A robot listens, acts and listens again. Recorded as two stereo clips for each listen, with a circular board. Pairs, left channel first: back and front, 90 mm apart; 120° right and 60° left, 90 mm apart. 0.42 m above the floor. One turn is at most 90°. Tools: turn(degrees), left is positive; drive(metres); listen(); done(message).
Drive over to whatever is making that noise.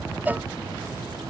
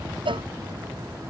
turn(degrees=70)
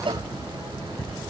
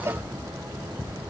drive(metres=1.0)
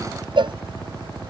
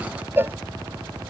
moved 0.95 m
drive(metres=1.0)
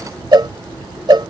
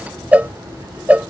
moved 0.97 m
turn(degrees=-10)
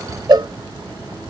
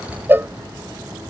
drive(metres=1.0)
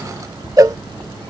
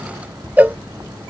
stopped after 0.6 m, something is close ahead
done("Arrived at the cowbell, straight ahead.")